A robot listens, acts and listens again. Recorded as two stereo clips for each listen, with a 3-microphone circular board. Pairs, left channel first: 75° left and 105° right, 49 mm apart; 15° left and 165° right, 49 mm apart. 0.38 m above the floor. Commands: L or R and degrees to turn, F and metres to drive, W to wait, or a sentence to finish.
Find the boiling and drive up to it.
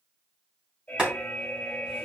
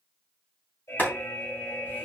R35
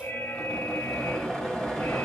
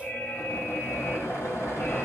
F1.0
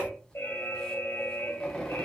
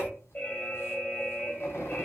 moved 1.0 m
F1.0
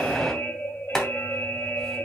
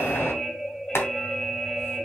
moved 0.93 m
F1.0
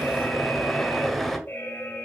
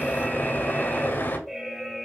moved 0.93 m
R10
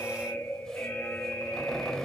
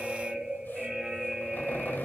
W
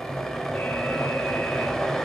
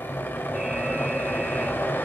F1.0
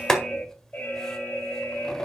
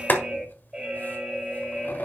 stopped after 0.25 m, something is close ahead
Arrived at the boiling, straight ahead.